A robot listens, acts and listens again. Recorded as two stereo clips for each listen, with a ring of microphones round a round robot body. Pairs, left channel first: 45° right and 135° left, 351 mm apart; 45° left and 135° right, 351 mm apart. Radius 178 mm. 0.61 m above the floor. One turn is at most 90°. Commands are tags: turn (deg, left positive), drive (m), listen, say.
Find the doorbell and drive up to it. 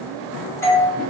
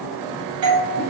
<turn deg="-90"/>
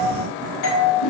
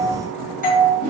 <turn deg="-20"/>
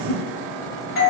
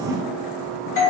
<drive m="1.0"/>
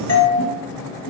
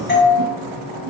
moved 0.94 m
<turn deg="-10"/>
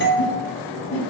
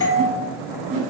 <drive m="1.0"/>
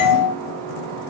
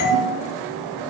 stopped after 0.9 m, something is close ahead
<turn deg="10"/>
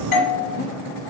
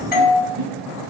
<say>Arrived at the doorbell, straight ahead.</say>